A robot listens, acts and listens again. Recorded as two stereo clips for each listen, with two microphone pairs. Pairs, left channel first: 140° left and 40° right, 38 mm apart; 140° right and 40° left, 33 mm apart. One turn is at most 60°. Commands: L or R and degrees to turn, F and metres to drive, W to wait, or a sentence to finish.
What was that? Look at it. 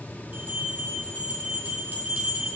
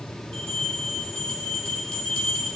R60
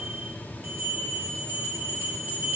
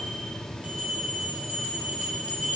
R10
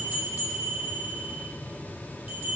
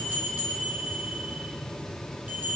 Found it: a bell, straight ahead.